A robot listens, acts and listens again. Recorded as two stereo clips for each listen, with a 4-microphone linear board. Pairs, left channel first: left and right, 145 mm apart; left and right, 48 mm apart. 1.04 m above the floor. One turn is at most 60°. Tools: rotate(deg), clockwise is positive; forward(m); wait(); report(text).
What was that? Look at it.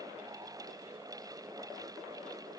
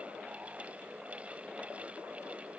wait()
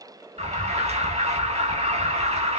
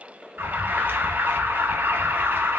rotate(50)
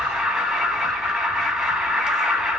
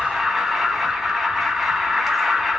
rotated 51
report("Found it: an alarm, straight ahead.")